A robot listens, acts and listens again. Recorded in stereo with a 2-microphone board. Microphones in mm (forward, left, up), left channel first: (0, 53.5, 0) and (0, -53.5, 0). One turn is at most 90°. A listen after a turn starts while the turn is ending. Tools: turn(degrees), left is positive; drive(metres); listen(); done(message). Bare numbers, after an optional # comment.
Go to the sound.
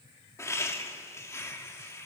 # The laughter: about 25° left or 155° left.
turn(25)
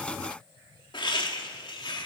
# So it is at 130° left.
turn(90)
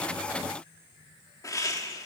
# The laughter is now 35° left.
turn(35)
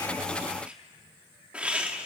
# The laughter is now 10° right.
turn(-10)
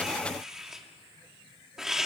drive(1.0)
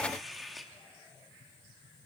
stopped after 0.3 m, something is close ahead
done("Blocked. The laughter is further on, straight ahead.")